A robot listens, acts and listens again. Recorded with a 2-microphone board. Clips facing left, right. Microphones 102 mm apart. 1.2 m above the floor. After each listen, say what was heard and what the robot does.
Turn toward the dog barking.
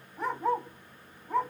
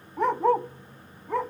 The dog barking: about 70° right or 110° right. Turn 70° right.
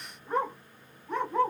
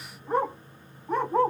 So it is at 40° right. Turn 40° right.
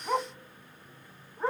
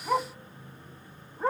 Found it: a dog barking, straight ahead, 2 to 4 m away.